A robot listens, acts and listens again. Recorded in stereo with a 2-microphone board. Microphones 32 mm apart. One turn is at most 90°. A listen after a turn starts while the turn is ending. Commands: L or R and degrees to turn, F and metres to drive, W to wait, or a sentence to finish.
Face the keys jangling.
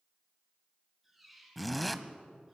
W
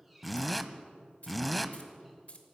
L45
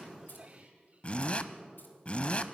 W
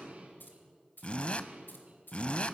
L90
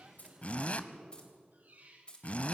L30
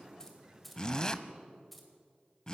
Found it: keys jangling, straight ahead, 2 to 4 m away.